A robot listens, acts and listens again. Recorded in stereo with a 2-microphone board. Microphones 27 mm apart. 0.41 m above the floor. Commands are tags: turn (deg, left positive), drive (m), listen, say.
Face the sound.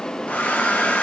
<turn deg="70"/>
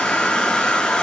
<turn deg="35"/>
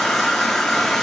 <turn deg="15"/>
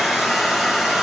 <say>Found it: a hair dryer, straight ahead.</say>